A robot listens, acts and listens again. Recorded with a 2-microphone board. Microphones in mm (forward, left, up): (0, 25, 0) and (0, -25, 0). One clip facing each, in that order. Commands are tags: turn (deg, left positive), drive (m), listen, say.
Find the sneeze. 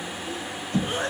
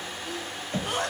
<turn deg="-65"/>
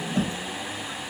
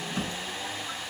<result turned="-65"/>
<listen/>
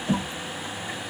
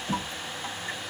<say>I heard a sneeze, but can't make it out now. It was about straight ahead or 50° right.</say>